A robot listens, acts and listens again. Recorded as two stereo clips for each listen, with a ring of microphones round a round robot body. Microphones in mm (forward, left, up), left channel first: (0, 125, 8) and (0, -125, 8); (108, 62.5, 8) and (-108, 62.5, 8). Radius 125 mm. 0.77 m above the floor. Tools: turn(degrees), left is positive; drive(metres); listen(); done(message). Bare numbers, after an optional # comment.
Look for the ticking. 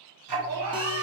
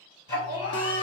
# The ticking: 75° right.
turn(-75)
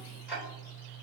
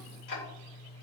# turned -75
done("Facing the ticking.")